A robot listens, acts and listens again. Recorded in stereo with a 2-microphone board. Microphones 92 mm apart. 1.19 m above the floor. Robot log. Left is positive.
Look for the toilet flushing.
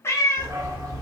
cmd idle
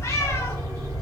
cmd idle
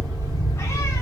end: I can't make out a toilet flushing to turn to.